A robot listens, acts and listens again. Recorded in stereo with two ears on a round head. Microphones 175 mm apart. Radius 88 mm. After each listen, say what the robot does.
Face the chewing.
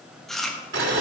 Turn 30° left.
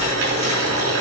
Keep listening.
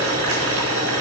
Keep listening.
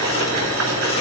I heard chewing, but can't make it out now. It was about 30° right or 150° left.